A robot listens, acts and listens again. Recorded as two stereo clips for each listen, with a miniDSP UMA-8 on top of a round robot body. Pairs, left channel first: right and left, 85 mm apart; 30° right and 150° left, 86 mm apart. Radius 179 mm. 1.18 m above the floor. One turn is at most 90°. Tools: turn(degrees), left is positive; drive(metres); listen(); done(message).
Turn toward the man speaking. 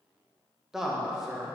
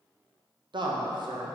turn(degrees=90)
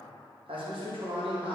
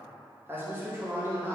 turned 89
turn(degrees=85)
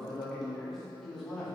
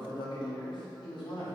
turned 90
done("Found it: a man speaking, straight ahead, 2 to 4 m away.")